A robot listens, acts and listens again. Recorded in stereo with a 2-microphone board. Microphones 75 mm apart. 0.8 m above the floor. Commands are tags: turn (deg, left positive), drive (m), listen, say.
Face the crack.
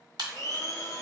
<turn deg="-70"/>
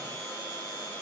<listen/>
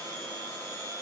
<say>I heard a crack, but can't make it out now. It was about straight ahead or 40° right.</say>